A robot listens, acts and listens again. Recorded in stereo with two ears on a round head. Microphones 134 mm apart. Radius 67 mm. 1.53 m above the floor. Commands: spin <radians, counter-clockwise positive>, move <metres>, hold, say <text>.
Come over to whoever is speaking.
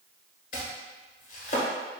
hold
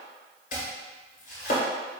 hold
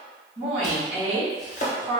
spin -0.79
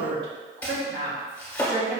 spin -1.57
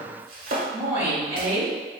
spin -0.26
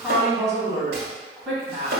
move 1.0
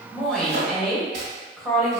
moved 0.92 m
move 1.0
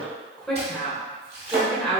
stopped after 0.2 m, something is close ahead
say Arrived at the woman speaking, straight ahead.